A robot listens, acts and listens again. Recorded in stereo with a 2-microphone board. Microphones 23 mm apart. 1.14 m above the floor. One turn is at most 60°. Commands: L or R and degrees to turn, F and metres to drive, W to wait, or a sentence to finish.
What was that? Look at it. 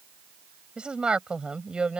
R50
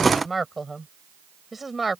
Found it: a woman speaking, straight ahead.